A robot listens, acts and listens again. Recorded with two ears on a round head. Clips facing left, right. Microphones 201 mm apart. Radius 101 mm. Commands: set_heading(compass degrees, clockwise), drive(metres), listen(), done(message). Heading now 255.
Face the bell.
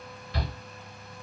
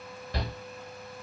listen()
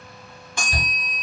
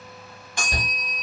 set_heading(180)
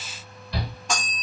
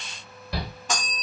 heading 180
done("Facing the bell.")